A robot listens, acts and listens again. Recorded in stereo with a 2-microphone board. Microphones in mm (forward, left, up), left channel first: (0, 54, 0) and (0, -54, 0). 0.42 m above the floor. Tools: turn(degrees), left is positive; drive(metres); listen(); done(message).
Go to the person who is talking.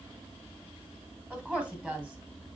turn(degrees=-30)
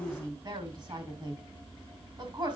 turn(degrees=-140)
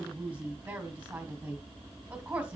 turn(degrees=-15)
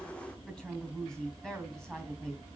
drive(metres=1.0)
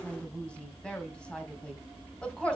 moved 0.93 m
turn(degrees=10)
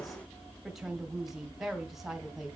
drive(metres=1.0)
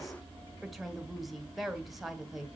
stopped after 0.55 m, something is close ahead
done("I am next to the woman speaking.")